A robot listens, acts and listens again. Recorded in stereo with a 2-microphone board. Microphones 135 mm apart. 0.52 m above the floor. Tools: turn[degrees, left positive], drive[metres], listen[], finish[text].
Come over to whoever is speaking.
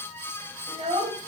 Thought: The child speaking: about 55° right or 125° right.
Action: turn[-55]
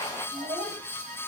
Thought: So it is at 70° right.
Action: turn[-70]
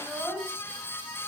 Action: drive[1.0]
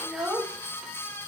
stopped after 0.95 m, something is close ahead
Action: finish[I am next to the child speaking.]